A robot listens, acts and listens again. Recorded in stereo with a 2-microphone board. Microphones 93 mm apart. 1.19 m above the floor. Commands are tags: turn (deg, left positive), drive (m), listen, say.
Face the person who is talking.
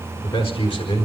<turn deg="90"/>
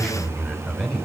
<say>Found it: a man speaking, straight ahead.</say>